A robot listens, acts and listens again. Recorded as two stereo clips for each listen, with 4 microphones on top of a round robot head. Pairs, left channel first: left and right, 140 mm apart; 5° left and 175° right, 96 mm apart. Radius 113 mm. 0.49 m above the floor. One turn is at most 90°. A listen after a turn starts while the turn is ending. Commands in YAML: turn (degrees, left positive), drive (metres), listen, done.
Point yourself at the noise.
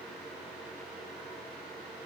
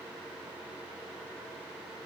listen: true
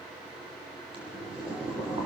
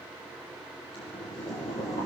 turn: -35
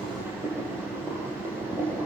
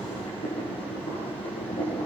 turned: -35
turn: -20
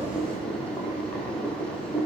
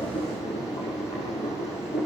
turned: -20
done: "Found it: boiling, straight ahead, over 4 m away."